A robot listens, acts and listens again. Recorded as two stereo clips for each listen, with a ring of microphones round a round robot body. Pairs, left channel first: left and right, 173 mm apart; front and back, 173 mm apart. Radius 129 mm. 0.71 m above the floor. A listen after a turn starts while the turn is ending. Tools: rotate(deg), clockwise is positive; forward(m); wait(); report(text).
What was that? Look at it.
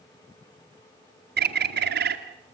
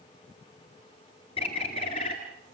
rotate(70)
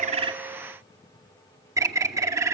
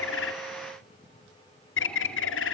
rotate(20)
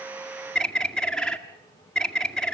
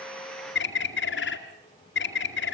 report("Facing the bird, 2 to 4 m away.")